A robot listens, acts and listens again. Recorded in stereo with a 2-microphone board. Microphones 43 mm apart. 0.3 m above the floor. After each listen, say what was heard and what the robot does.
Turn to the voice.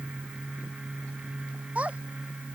The child speaking: about 35° right or 145° right. Turn 35° right.
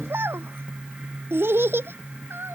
So it is at 115° right. Turn 115° right.
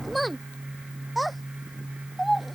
Facing the child speaking.